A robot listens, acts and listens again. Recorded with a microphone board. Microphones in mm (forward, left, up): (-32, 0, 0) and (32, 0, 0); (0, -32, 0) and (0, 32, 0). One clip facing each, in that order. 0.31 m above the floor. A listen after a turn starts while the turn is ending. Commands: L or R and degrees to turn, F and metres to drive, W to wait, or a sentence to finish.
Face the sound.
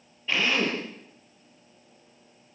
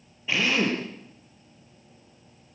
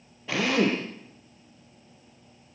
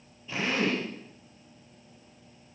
R85
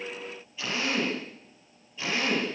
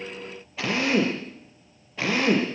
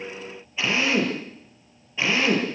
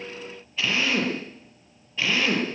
R20
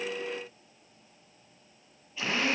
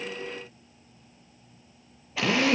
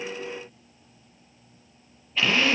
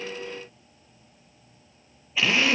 Facing the drill, over 4 m away.